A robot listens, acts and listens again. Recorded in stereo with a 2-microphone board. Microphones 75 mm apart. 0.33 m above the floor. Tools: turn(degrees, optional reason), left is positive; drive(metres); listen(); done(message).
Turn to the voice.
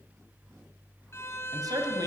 turn(degrees=-55, reason="The man speaking: about 55° right or 125° right.")
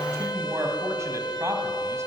turn(degrees=-50, reason="So it is at 50° right.")
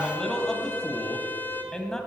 turn(degrees=10, reason="The man speaking is now 10° left.")
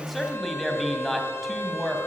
done("Found it: a man speaking, straight ahead, 1 to 2 m away.")